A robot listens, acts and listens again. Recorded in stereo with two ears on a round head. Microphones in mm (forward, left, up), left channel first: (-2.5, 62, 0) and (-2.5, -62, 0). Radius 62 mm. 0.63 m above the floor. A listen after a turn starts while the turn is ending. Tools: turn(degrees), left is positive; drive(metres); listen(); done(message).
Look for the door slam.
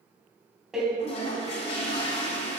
turn(degrees=-30)
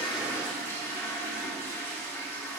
listen()
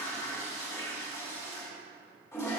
done("I heard a door slam, but can't make it out now. It was about 25° left or 145° right.")